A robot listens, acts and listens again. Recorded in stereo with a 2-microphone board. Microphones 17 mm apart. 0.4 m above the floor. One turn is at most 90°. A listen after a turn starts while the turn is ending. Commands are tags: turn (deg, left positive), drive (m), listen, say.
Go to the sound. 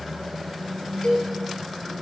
<turn deg="70"/>
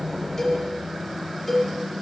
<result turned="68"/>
<drive m="1.0"/>
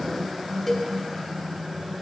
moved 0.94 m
<turn deg="15"/>
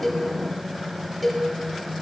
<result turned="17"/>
<drive m="1.0"/>
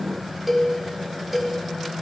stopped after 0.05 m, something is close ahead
<turn deg="-10"/>
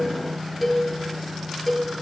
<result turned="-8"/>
<say>Arrived at the cowbell, straight ahead.</say>